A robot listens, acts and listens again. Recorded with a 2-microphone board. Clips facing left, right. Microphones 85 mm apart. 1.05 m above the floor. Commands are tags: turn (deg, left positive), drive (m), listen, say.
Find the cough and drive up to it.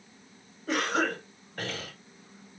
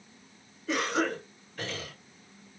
<turn deg="50"/>
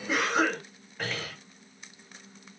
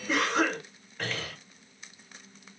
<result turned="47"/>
<drive m="1.0"/>
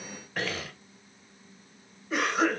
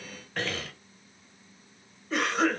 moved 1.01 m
<drive m="1.0"/>
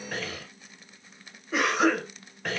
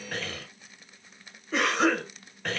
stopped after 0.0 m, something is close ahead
<say>I am next to the cough.</say>